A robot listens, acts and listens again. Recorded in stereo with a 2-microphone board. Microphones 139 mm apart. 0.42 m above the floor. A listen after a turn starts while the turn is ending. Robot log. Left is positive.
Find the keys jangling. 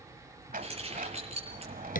note: The keys jangling: about 45° right or 135° right.
cmd yaw -45
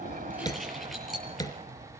end: Found it: keys jangling, straight ahead.